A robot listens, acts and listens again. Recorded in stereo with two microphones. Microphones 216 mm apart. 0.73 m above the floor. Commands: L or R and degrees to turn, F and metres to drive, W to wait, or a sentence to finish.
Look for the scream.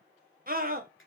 R45
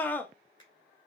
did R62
L10
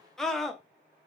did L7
Facing the scream, under 1 m away.